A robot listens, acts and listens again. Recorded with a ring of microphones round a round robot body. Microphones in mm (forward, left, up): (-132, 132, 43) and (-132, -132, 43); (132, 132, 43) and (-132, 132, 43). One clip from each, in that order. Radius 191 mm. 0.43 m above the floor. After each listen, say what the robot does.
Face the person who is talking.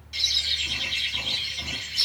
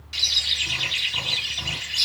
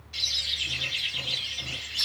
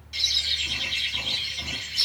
Keep listening.
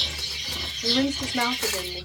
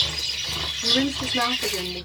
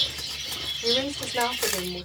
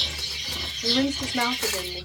Turn 25° right.
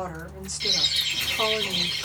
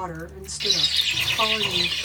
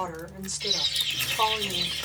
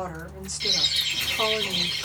Turn 30° right.
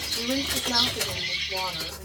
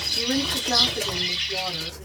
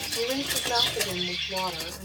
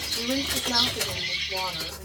Turn 10° right.
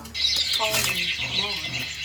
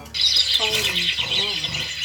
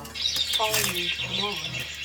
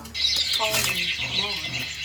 Keep listening.
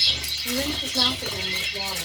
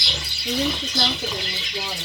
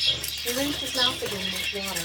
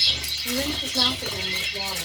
Keep listening.
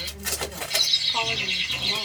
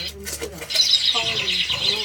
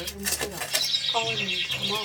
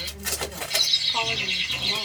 Facing where the woman speaking came from. I can't hear it now.